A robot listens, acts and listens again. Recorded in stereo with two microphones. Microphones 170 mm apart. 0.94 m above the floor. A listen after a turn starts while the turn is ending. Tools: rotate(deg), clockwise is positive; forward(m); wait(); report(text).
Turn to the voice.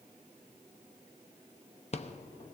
wait()
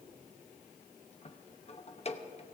wait()
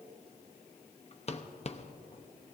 report("I can't make out anyone speaking to turn to.")